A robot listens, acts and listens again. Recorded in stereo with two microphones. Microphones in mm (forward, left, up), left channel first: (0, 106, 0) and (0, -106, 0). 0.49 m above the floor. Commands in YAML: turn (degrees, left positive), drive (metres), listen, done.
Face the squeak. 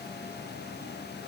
listen: true
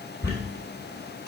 turn: 50
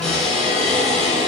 done: "Facing the squeak, 2 to 4 m away."